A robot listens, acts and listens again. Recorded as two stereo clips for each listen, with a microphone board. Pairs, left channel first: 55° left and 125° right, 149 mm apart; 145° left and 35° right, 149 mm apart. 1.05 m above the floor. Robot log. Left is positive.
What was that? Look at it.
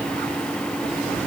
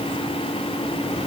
cmd idle
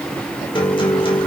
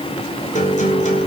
note: The guitar: 110° left.
cmd yaw +110
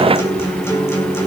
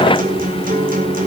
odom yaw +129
note: The guitar is now 15° right.
cmd yaw -15
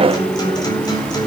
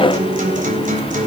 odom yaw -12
end: Facing the guitar, over 4 m away.